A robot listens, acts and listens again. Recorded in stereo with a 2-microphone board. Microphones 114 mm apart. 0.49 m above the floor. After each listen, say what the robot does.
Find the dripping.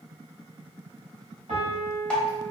Turn 30° left.
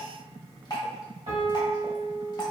Turn 140° left.
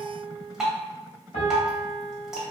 Facing the dripping, under 1 m away.